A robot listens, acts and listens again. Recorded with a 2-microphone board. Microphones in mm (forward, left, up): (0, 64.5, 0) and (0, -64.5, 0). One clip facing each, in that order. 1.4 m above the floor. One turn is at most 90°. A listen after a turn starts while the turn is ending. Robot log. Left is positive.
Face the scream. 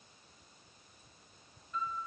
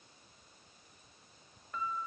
cmd idle
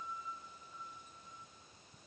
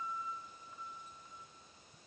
cmd idle
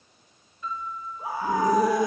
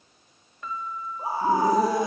note: The scream: about 30° right or 150° right.
cmd yaw -30
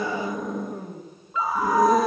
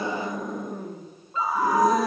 end: Found it: a scream, straight ahead.